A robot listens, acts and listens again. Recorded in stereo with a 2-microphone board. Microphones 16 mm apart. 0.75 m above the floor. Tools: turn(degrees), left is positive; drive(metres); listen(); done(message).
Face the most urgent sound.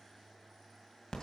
listen()
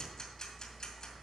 listen()
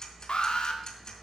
turn(degrees=65)
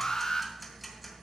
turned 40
turn(degrees=45)
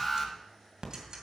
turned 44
done("Facing the alarm.")